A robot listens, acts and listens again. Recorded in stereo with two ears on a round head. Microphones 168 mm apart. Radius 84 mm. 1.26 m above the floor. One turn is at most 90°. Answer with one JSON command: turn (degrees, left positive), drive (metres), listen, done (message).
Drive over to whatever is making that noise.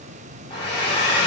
{"turn": 25}
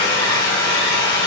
{"turn": 90}
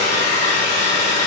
{"turn": 40}
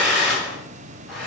{"drive": 1.0}
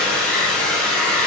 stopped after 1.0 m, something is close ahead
{"done": "I am next to the hair dryer."}